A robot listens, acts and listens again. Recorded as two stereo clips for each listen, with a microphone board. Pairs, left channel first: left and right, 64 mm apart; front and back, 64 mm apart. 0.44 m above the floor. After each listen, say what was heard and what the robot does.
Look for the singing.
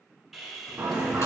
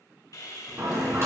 The singing: 140° right. Turn 140° right.
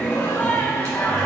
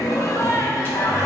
The singing is now 35° left. Turn 35° left.
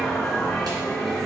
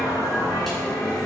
Found it: singing, straight ahead.